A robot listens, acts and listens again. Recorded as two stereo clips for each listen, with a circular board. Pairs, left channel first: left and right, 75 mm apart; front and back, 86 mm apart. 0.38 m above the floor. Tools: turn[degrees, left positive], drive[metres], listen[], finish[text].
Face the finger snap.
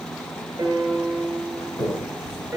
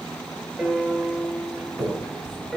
Thought: The finger snap: 90° left.
Action: turn[90]
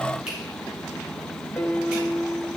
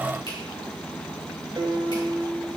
Action: listen[]
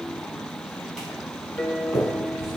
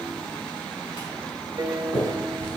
Thought: The finger snap is now 10° right.
Action: turn[-10]
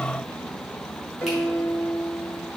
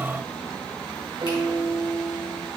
Action: listen[]
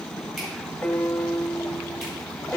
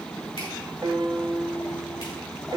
Action: listen[]
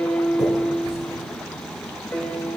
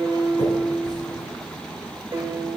Action: finish[Facing where the finger snap came from. I can't hear it now.]